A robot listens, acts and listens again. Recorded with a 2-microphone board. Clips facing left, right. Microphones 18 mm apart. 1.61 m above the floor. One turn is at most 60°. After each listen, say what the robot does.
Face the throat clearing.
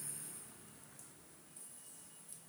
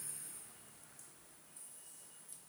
Keep listening.
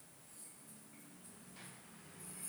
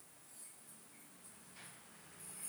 Keep listening.
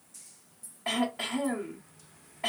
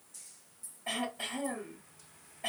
Turn 60° left.
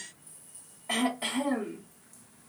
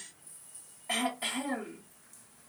Turn 15° left.
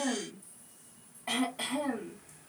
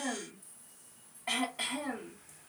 Found it: throat clearing, straight ahead, 1 to 2 m away.